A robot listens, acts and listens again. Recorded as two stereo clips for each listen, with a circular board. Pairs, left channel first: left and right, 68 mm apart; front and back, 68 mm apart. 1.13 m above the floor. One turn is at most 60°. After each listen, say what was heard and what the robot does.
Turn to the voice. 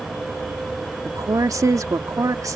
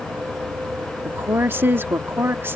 The woman speaking: 125° right. Turn 60° right.
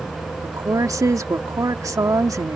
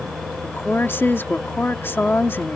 The woman speaking is now 55° right. Turn 55° right.
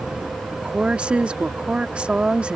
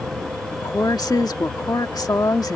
The woman speaking is now 15° right. Turn 15° right.
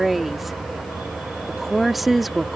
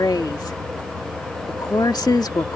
Found it: a woman speaking, straight ahead.